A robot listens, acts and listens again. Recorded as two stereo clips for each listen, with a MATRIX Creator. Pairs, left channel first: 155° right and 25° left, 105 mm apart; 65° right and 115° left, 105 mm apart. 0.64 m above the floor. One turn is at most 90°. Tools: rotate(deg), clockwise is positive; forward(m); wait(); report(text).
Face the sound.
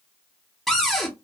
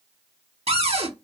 rotate(-90)
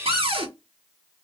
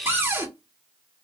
rotate(-45)
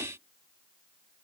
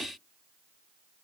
wait()
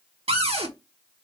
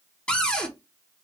rotate(-10)
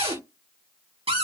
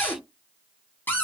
report("Facing the cupboard door, 1 to 2 m away.")